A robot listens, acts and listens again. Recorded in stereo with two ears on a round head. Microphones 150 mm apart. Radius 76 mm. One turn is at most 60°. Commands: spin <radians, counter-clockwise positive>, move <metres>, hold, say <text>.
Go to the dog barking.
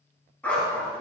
spin 0.52
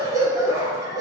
spin -0.35
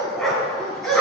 move 1.0
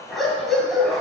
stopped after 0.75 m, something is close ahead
say Blocked. The dog barking is further on, straight ahead.